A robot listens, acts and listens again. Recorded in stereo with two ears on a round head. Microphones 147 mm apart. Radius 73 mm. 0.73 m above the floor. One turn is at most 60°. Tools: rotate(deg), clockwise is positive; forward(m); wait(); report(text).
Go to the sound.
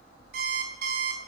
rotate(60)
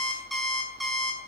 forward(1.0)
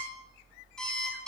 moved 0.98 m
forward(1.0)
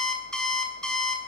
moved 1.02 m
forward(1.0)
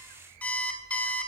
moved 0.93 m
rotate(-10)
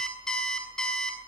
forward(1.0)
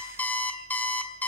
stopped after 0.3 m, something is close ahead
rotate(-10)
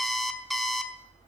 report("Arrived at the alarm clock, straight ahead.")